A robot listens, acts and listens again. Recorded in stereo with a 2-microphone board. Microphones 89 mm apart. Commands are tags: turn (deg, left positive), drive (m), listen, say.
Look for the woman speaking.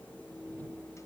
<listen/>
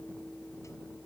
<listen/>
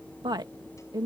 <turn deg="-50"/>
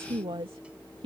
<turn deg="-75"/>
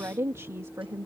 <turn deg="-35"/>
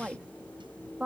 <turn deg="-10"/>
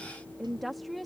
<say>Found it: a woman speaking, straight ahead.</say>